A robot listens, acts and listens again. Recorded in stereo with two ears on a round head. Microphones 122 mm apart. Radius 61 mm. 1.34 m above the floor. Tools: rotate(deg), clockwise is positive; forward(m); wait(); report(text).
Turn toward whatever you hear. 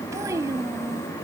rotate(25)
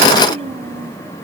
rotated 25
rotate(130)
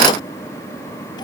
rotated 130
wait()
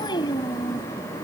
rotate(-35)
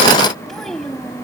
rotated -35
report("Facing the child speaking.")